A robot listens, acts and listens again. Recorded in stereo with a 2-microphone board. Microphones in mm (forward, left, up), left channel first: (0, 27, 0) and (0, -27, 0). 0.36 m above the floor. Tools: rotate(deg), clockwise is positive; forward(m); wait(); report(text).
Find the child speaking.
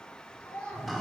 rotate(-15)
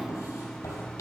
wait()
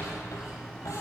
wait()
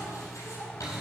report("I heard a child speaking, but can't make it out now. It was about straight ahead or 150° left.")